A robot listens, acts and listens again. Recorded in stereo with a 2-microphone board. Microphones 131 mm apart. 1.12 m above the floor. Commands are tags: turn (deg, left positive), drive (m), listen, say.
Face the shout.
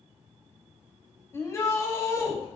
<turn deg="25"/>
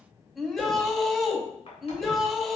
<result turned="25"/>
<say>Facing the shout.</say>